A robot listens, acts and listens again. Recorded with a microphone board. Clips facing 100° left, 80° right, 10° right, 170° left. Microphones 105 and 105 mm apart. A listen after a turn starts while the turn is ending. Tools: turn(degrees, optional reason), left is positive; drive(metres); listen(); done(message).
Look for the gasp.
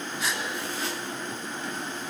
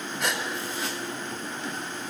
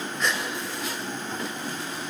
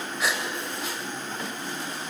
turn(degrees=-105, reason="The gasp: 105° right.")
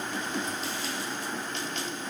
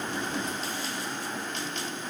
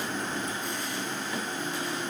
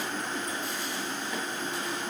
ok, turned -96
turn(degrees=-10, reason="Nothing new. It was at 10° right.")
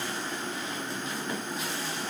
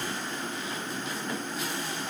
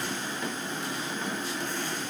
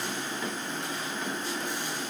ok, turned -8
done("I heard a gasp from this way, but can't make it out now.")